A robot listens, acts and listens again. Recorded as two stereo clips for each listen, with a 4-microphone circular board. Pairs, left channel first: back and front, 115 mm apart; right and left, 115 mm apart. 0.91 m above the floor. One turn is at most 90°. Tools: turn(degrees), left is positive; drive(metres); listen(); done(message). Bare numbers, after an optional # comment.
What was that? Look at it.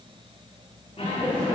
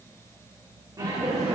# The laughter: 145° left.
turn(90)
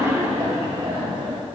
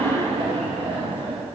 # The laughter is now 50° left.
turn(50)
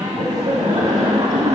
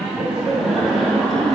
done("Found it: laughter, straight ahead, 1 to 2 m away.")